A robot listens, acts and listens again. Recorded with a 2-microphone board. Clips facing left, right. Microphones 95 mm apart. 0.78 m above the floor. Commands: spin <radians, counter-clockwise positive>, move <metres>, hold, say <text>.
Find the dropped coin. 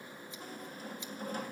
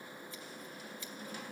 hold
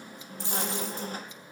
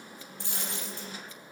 spin -1.13
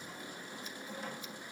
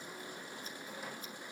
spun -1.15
hold
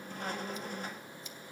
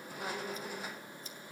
say I heard a dropped coin, but can't make it out now. It was about straight ahead or 50° right.